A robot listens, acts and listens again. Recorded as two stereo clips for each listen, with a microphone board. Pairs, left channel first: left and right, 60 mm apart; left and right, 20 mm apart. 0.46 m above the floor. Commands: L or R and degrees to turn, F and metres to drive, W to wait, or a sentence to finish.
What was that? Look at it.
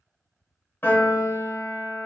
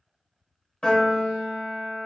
L40
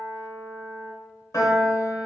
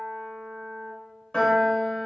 L100
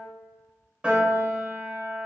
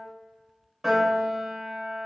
R20
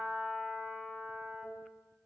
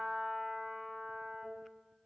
Facing the piano, 1 to 2 m away.